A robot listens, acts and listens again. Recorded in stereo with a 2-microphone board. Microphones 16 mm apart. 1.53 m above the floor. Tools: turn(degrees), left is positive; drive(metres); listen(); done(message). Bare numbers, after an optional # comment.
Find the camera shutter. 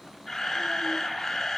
# The camera shutter: about 35° left or 145° left.
turn(35)
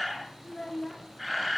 done("Facing the camera shutter.")